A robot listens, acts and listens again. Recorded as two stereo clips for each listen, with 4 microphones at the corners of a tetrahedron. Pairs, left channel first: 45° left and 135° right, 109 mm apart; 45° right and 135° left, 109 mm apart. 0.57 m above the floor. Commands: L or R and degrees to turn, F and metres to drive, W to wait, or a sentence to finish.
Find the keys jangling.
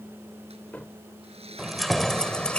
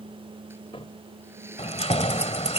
R35
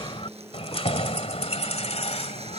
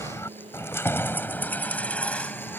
L35
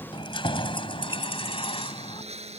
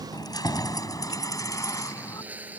L15
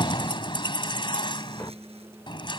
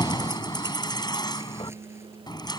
Facing the keys jangling.